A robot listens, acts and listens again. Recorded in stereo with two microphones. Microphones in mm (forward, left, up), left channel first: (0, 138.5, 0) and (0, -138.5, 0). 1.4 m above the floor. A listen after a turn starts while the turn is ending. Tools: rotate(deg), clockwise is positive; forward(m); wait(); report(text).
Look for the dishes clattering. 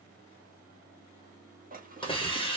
rotate(30)
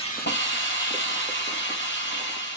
wait()
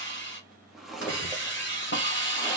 report("Facing the dishes clattering.")